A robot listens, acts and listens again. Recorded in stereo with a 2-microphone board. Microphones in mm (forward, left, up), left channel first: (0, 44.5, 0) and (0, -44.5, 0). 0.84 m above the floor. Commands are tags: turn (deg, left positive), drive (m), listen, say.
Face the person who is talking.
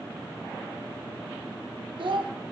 <turn deg="-75"/>
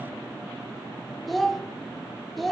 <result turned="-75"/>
<say>Facing the child speaking, under 1 m away.</say>